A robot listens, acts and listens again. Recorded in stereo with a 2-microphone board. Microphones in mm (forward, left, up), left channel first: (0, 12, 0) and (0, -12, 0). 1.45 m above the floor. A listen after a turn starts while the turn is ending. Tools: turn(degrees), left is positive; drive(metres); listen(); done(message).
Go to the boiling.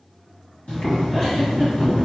turn(degrees=55)
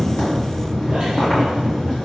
turn(degrees=45)
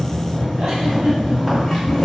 drive(metres=1.0)
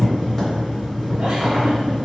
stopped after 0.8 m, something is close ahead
done("Arrived at the boiling, straight ahead.")